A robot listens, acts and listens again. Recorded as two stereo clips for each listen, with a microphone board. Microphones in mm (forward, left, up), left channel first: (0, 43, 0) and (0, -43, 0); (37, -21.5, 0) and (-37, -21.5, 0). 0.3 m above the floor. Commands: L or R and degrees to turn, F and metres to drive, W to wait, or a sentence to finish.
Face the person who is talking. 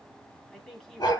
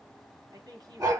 L175
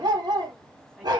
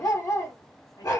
W
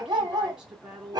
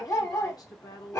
R10
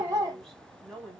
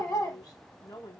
Facing the woman speaking.